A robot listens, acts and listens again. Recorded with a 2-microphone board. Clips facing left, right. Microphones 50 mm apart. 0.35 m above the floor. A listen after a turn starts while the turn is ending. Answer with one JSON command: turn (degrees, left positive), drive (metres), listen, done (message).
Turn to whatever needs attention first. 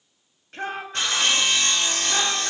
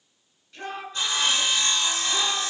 {"turn": 65}
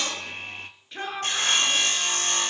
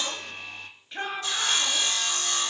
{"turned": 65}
{"done": "Facing the shout."}